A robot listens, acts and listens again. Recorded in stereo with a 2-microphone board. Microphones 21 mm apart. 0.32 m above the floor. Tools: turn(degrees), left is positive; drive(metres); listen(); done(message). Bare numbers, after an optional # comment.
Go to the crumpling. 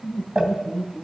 # The crumpling: about 35° right or 145° right.
turn(-35)
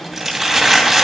# So it is at 10° right.
turn(-10)
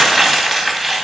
drive(1.0)
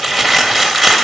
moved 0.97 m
drive(1.0)
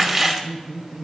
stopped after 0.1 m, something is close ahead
done("I am next to the crumpling.")